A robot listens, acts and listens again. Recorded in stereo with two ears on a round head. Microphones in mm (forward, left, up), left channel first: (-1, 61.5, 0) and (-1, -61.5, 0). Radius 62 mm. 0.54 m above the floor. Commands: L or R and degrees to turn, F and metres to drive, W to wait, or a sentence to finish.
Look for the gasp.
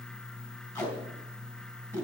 W
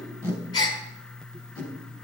L30
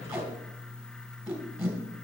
W
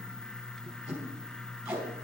I heard a gasp, but can't make it out now. It was about straight ahead or 120° left.